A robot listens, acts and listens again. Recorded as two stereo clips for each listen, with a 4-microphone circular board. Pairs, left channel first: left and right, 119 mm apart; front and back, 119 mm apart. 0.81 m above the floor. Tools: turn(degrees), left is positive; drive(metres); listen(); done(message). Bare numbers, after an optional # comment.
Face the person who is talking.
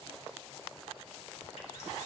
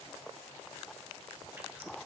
listen()
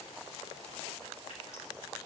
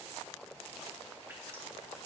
listen()
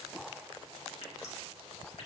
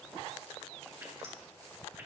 done("I can't make out anyone speaking to turn to.")